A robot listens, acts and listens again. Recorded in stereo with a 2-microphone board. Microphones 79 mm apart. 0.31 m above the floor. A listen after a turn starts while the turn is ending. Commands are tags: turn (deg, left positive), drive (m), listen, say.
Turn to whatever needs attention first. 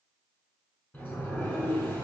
<listen/>
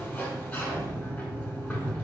<listen/>
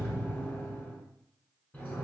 <say>I can't make out anything urgent to turn to.</say>